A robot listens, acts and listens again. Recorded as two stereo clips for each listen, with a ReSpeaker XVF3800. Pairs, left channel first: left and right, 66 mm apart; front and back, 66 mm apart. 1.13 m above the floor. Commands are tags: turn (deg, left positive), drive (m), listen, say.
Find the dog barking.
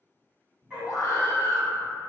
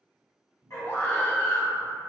<turn deg="-25"/>
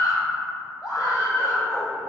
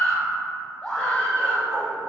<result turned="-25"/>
<turn deg="25"/>
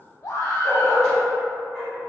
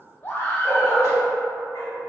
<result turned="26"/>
<say>Facing the dog barking, 2 to 4 m away.</say>